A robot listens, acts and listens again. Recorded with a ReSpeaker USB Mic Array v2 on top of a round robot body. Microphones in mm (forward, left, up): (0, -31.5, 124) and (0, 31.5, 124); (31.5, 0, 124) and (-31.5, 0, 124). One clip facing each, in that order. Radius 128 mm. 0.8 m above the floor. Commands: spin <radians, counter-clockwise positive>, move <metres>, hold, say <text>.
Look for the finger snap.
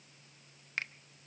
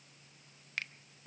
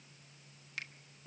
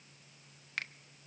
spin -2.62
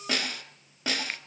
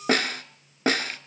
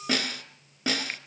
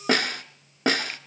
hold
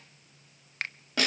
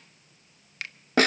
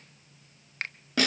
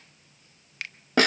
spin -0.79
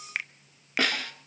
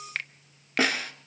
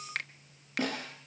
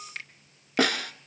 spin -0.17
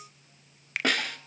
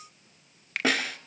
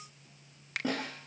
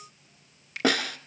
say Facing the finger snap, 1 to 2 m away.